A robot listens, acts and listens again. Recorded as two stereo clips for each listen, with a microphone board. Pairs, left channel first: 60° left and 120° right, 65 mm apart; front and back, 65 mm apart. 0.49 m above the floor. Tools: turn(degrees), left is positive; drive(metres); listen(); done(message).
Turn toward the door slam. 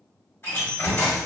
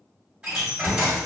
turn(degrees=110)
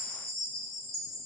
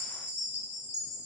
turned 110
done("Facing where the door slam came from. I can't hear it now.")